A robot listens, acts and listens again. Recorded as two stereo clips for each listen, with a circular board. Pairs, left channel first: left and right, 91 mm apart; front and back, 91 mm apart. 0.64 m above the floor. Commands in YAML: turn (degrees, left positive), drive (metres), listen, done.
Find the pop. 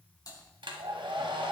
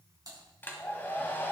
listen: true
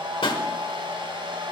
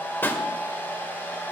turn: 70
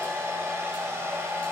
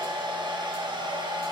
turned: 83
turn: -15
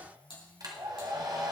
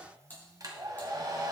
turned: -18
done: "I heard a pop from this way, but can't make it out now."